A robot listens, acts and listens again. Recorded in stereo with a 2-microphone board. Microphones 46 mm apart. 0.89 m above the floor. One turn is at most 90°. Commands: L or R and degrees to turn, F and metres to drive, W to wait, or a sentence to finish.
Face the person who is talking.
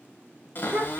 R50
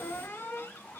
W
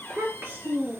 R75
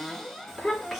Facing the child speaking, 2 to 4 m away.